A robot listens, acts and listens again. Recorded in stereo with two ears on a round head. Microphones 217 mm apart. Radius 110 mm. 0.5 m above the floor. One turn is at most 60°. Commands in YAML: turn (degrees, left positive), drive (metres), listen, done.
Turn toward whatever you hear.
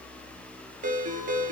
turn: -35
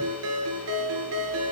turn: -60
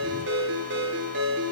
turn: -50
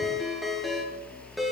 done: "Found it: a ringtone, straight ahead."